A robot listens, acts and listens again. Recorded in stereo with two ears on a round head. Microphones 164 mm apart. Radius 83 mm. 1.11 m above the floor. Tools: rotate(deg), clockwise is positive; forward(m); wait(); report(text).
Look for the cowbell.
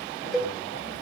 rotate(-30)
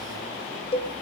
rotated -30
rotate(-145)
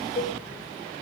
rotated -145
rotate(-40)
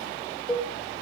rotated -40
report("Found it: a cowbell, straight ahead, 1 to 2 m away.")